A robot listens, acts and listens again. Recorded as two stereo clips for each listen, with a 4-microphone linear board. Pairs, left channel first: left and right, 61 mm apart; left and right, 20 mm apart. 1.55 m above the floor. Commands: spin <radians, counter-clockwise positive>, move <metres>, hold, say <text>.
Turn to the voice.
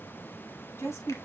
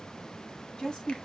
spin 0.87
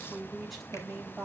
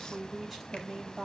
say Facing the woman speaking.